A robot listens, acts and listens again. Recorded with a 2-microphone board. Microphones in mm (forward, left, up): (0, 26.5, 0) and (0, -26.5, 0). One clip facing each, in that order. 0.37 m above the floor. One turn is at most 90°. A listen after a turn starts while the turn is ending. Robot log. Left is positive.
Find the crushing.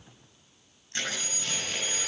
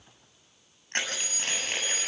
note: The crushing: about 50° right or 130° right.
cmd yaw -50
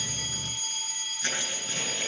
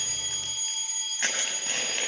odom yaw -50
note: So it is at 75° right.
cmd yaw -75
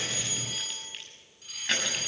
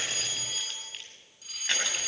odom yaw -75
cmd idle
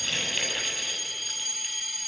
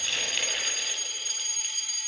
cmd idle
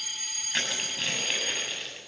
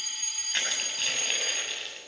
end: Found it: crushing, straight ahead.